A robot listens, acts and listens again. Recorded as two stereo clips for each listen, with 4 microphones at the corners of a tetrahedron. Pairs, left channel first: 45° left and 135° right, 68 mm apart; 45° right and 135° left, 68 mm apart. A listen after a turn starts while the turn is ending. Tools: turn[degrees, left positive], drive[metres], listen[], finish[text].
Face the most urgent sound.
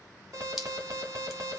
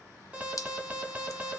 Thought: The alarm: 165° right.
Action: turn[-165]
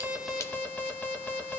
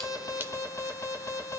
Thought: The alarm is now 20° right.
Action: turn[-20]
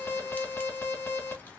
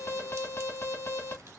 Action: finish[Facing the alarm, 1 to 2 m away.]